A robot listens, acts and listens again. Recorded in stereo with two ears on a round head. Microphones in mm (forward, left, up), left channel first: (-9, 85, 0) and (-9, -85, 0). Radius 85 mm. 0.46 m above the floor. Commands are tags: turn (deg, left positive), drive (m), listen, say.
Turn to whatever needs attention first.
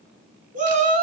<turn deg="-45"/>
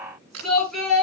<say>Facing the shout.</say>